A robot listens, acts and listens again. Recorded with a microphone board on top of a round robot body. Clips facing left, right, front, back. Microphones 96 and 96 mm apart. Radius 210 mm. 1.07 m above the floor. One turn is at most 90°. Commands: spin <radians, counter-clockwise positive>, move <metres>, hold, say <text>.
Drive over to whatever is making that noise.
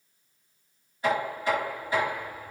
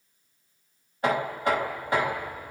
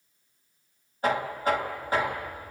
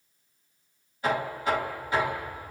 spin -0.87
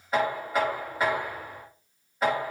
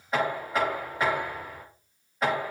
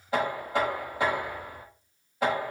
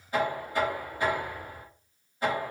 move 1.0
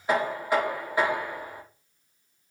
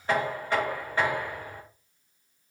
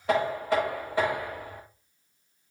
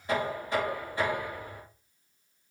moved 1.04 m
spin 0.17
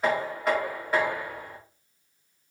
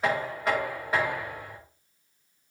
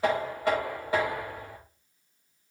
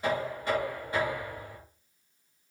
move 1.0
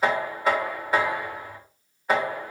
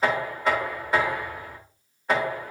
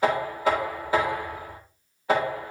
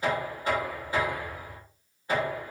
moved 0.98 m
move 1.0
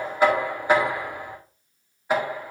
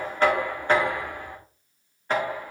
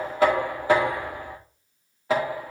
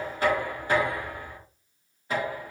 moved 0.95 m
spin 0.17
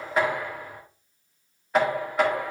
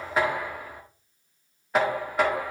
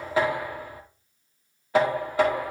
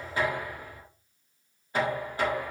move 1.0
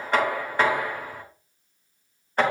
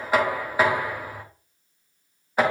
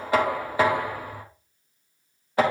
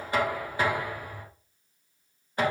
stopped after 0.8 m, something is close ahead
say I am next to the knocking.